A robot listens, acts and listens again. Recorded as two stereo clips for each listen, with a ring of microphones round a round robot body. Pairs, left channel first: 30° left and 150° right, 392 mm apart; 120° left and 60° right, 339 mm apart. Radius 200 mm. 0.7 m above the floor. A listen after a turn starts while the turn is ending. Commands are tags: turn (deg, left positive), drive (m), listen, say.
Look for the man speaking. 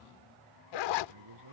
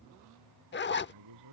<turn deg="-105"/>
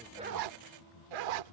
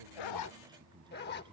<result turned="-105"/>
<turn deg="15"/>
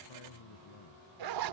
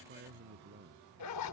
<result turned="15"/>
<say>Facing the man speaking.</say>